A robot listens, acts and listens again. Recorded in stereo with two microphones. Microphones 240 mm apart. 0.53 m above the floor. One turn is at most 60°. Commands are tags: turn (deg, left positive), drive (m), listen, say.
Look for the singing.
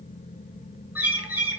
<listen/>
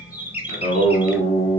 <turn deg="25"/>
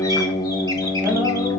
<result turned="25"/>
<say>Found it: singing, straight ahead, 1 to 2 m away.</say>